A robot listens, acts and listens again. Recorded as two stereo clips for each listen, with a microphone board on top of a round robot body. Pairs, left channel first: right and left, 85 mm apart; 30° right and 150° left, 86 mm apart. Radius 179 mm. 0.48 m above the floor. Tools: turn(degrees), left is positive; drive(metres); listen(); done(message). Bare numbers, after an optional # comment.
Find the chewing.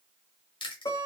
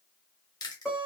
# The chewing: 75° right.
turn(-75)
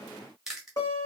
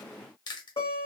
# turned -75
done("Found it: chewing, straight ahead.")